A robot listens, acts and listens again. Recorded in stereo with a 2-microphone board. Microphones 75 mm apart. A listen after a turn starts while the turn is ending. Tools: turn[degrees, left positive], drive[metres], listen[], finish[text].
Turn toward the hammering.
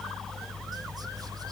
Action: listen[]
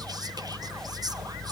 Action: listen[]
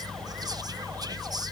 Action: finish[I can't make out hammering.]